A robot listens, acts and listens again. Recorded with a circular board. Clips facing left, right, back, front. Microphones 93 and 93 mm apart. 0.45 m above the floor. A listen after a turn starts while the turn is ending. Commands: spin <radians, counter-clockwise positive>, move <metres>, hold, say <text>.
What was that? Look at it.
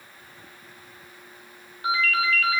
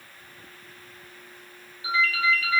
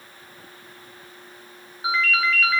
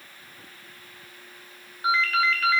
spin 1.66
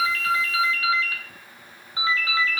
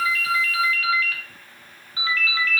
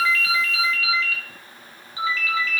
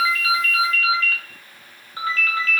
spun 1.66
spin 0.52
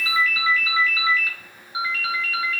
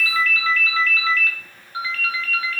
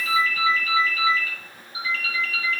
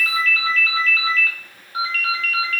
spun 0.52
spin 0.26
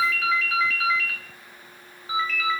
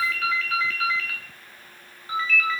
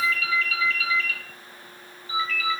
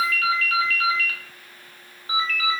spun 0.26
say Facing the ringtone, under 1 m away.